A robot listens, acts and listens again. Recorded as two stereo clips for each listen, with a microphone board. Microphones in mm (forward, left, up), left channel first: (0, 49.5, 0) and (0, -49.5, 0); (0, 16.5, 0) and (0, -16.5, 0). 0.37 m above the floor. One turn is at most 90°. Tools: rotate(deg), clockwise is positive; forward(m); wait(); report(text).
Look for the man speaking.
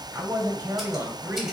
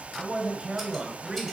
rotate(20)
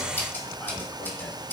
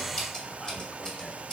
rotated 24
wait()
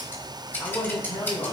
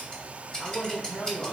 rotate(-35)
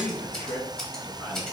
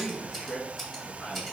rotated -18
rotate(-25)
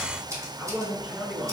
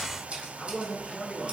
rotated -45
rotate(15)
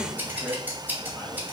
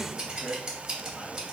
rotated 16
report("Facing the man speaking, 2 to 4 m away.")